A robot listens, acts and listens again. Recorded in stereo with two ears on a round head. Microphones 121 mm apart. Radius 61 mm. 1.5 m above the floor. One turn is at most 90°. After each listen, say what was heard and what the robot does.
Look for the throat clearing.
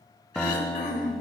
The throat clearing: about 65° left or 115° left. Turn 65° left.
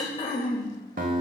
So it is at 45° left. Turn 45° left.
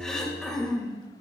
Facing the throat clearing, 1 to 2 m away.